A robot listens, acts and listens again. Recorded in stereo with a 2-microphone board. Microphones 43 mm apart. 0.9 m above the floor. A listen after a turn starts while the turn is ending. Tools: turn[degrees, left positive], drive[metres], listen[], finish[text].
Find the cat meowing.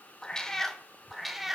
Action: turn[-30]
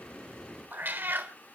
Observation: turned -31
Thought: So it is at 125° right.
Action: turn[-125]
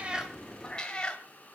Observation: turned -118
Thought: The cat meowing is now 20° left.
Action: turn[20]
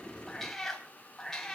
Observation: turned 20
Thought: The cat meowing is now 10° left.
Action: turn[10]
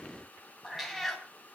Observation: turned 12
Action: finish[Facing the cat meowing.]